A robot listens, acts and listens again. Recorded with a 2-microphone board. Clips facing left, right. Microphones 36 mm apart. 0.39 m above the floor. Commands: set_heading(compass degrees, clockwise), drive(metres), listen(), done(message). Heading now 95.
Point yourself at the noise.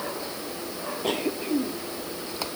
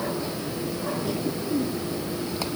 set_heading(25)
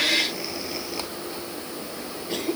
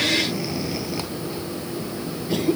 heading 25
done("Facing the cough.")